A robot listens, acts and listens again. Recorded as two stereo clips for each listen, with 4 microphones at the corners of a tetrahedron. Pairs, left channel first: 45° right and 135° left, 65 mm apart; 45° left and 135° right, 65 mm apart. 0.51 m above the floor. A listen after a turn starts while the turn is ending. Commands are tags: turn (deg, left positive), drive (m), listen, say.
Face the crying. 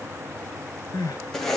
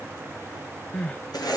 <turn deg="-25"/>
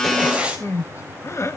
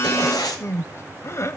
<say>Found it: crying, straight ahead, under 1 m away.</say>